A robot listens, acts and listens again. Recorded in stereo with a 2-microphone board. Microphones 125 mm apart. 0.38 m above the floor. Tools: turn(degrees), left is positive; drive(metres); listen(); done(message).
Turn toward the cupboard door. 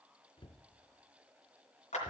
turn(degrees=45)
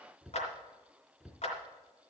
done("Facing the cupboard door.")